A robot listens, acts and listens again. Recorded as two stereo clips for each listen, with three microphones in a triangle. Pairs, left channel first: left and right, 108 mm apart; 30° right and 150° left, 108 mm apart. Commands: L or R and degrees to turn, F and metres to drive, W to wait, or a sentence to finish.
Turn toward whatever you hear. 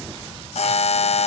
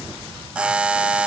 L70
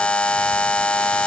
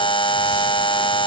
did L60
L10
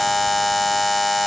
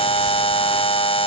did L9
Facing the buzzer, under 1 m away.